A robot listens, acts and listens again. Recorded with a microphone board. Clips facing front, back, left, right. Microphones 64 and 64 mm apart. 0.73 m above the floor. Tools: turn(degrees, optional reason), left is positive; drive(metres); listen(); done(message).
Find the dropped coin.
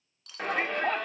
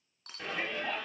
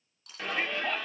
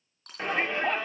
turn(degrees=-130, reason="The dropped coin: 130° right.")
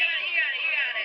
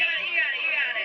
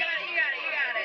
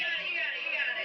done("I heard a dropped coin from this way, but can't make it out now.")